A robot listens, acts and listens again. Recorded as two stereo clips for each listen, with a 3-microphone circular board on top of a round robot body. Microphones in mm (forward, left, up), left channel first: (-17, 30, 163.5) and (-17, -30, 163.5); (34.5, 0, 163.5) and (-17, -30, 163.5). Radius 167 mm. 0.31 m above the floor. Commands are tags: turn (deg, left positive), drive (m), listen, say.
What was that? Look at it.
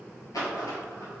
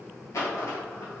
<turn deg="65"/>
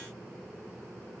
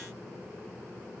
<say>I heard a dropped coin from this way, but can't make it out now.</say>